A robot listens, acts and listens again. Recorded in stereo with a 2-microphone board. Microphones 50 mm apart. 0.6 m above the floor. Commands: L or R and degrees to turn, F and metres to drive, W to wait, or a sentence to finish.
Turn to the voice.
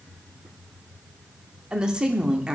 R20
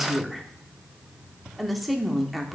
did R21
Found it: a woman speaking, straight ahead, 1 to 2 m away.